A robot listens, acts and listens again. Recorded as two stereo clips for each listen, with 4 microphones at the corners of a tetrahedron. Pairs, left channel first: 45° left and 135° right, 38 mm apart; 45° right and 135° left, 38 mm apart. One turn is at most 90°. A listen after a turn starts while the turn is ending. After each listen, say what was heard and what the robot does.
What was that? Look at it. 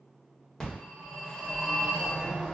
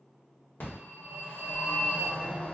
The phone ringing: 25° right. Turn 25° right.
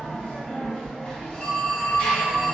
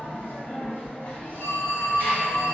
The phone ringing is now 15° right. Turn 15° right.
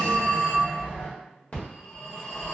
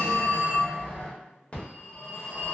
Found it: a phone ringing, straight ahead, 1 to 2 m away.